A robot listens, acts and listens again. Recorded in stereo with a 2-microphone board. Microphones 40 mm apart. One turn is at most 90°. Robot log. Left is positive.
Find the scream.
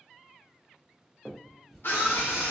note: The scream: about 65° left or 115° left.
cmd yaw +65
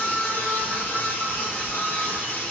note: So it is at 50° left.
cmd yaw +50
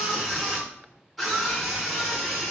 end: Facing the scream.